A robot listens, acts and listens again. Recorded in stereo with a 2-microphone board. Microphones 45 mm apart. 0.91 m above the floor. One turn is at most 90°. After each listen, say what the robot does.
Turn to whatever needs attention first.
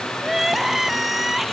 Turn 30° right.
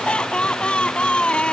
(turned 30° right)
Turn 25° left.
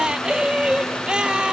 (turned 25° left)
Turn 20° right.
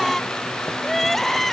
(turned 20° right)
Facing the crying.